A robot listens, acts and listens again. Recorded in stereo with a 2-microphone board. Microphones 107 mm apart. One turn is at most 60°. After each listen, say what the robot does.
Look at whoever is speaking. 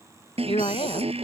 Turn 60° left.
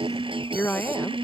Turn 20° left.
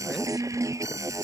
Keep listening.
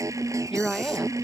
Facing the woman speaking.